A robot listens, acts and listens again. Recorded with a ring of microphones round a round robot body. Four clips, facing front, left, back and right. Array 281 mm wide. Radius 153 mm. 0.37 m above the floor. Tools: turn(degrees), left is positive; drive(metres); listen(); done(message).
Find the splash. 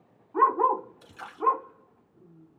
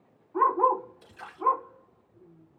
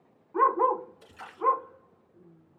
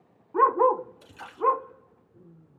turn(degrees=-60)
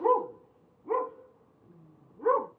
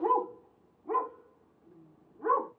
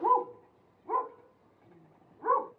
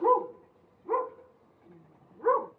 done("I heard a splash from this way, but can't make it out now.")